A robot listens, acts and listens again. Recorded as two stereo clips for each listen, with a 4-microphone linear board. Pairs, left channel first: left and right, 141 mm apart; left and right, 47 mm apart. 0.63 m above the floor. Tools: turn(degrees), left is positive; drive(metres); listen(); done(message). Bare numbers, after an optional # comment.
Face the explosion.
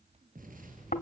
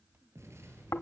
turn(-90)
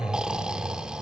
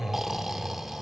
done("I heard an explosion from this way, but can't make it out now.")